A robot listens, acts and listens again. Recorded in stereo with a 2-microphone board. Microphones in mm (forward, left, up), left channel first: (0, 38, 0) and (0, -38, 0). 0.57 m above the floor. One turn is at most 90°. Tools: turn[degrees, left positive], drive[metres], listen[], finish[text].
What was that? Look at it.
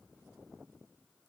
Action: listen[]
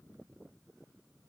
Action: listen[]
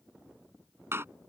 Thought: The door slam: about 35° right or 145° right.
Action: turn[-35]
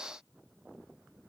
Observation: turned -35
Action: listen[]
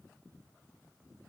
Action: finish[I heard a door slam, but can't make it out now. It was about straight ahead or 110° right.]